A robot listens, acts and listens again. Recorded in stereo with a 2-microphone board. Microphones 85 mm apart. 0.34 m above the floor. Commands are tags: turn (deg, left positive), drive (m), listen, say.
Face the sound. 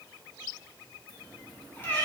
<turn deg="30"/>
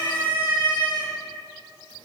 <turn deg="105"/>
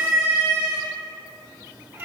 <turn deg="-20"/>
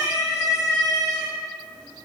<say>Facing the cat meowing, 2 to 4 m away.</say>